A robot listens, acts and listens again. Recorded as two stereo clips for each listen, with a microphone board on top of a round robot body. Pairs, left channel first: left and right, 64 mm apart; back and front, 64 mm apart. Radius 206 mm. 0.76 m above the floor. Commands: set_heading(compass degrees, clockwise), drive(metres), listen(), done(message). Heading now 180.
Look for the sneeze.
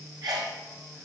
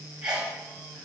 set_heading(260)
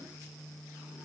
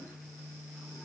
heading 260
done("Facing where the sneeze came from. I can't hear it now.")